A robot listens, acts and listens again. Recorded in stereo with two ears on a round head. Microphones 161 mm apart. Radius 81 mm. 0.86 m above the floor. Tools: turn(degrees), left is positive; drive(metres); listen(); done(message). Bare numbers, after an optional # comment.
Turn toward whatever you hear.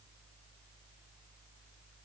listen()
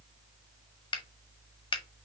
# The finger snap: about 25° left or 155° left.
turn(25)
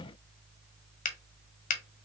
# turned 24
# So it is at 125° left.
turn(125)
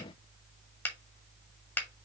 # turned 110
# The finger snap is now 15° left.
turn(15)
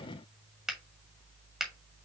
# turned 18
done("Facing the finger snap, 1 to 2 m away.")